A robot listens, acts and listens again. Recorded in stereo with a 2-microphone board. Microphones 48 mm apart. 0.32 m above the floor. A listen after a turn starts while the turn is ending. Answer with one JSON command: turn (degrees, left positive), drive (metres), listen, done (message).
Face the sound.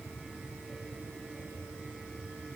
{"listen": true}
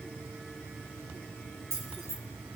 {"turn": -70}
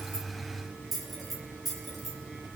{"done": "Found it: keys jangling, straight ahead, over 4 m away."}